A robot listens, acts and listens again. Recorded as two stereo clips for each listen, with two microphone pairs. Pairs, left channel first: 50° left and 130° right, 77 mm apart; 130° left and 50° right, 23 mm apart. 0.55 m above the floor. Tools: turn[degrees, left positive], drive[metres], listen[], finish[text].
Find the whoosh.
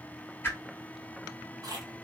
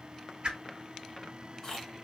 Thought: The whoosh: 15° right.
Action: turn[-15]
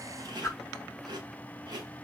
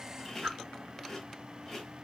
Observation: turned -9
Action: finish[Facing the whoosh, 1 to 2 m away.]